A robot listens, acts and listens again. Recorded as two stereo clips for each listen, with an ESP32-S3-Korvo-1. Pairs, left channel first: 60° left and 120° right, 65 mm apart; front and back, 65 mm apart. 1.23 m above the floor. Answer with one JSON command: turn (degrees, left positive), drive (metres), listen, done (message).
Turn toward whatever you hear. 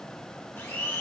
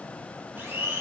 {"turn": 120}
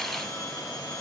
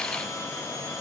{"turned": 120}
{"turn": 40}
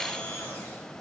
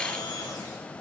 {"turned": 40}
{"done": "Found it: a blender, straight ahead."}